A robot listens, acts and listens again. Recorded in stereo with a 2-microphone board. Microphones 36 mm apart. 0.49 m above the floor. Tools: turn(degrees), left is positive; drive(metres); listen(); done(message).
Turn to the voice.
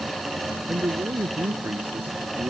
turn(degrees=-60)
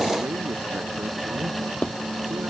listen()
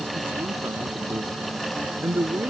turn(degrees=-60)
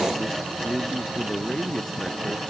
turn(degrees=15)
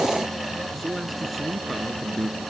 done("Facing the man speaking.")